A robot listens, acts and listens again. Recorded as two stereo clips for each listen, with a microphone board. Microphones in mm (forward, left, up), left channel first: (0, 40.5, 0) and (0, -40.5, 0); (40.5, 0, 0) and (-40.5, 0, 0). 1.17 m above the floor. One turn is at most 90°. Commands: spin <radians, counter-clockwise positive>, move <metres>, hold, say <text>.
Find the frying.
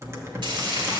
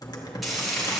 spin -1.57
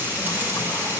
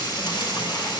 spin -0.44
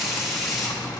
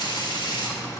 say Facing the frying.